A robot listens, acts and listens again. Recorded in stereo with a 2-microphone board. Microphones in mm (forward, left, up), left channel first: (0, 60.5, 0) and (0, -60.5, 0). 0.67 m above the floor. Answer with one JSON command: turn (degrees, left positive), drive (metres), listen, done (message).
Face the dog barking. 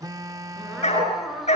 {"turn": 75}
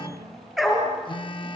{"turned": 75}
{"done": "Found it: a dog barking, straight ahead."}